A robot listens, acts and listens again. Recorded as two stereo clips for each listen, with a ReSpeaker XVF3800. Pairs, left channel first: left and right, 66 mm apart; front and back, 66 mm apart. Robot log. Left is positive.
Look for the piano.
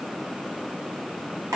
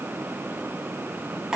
cmd idle
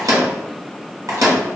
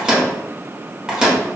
cmd idle
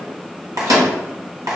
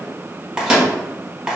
end: I can't make out a piano, only a microwave.